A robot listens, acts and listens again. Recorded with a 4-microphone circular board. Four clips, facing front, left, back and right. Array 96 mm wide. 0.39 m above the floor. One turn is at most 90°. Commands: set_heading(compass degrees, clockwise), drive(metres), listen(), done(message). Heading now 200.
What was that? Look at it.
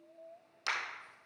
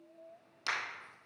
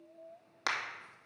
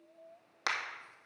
set_heading(290)
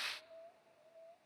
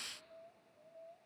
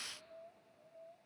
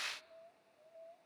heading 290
set_heading(335)
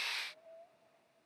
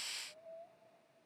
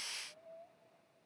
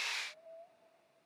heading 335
done("Facing where the crack came from. I can't hear it now.")